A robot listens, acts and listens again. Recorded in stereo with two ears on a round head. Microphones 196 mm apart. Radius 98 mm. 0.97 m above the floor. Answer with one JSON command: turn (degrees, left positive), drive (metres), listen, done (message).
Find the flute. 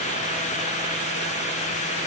{"listen": true}
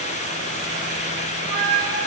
{"turn": -25}
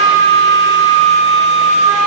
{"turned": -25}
{"turn": -130}
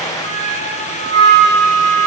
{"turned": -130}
{"turn": 35}
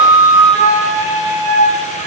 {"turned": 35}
{"done": "Found it: a flute, straight ahead, 2 to 4 m away."}